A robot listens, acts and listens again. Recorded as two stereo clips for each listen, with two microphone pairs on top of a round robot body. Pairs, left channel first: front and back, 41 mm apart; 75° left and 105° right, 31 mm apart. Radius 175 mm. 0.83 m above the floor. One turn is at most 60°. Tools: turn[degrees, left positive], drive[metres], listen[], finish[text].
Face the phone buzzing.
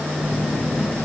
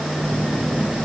Thought: The phone buzzing: 15° right.
Action: turn[-15]
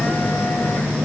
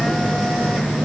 Action: finish[Found it: a phone buzzing, straight ahead, 1 to 2 m away.]